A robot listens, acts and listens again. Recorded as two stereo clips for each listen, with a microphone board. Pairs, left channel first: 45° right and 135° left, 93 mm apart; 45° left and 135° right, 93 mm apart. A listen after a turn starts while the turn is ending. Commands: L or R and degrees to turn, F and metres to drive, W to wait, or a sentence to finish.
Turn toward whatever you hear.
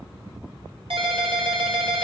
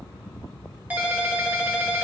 L150
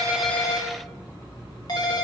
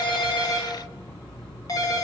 Facing the ringtone, 1 to 2 m away.